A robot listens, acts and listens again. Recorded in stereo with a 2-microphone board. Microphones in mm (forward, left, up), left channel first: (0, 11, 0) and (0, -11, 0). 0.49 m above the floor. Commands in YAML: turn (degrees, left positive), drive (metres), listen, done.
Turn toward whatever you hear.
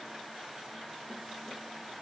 listen: true
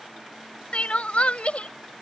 turn: 70
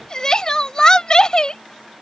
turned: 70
turn: 35
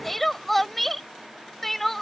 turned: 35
turn: 10
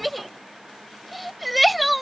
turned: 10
done: "Facing the crying."